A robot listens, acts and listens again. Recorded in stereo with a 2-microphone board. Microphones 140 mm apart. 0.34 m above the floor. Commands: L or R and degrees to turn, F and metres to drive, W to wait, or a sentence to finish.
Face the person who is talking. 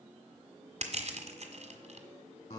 W
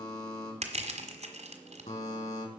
W
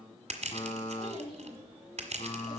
L40
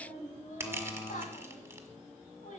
L95
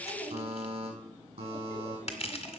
L20
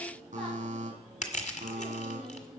Found it: a child speaking, straight ahead.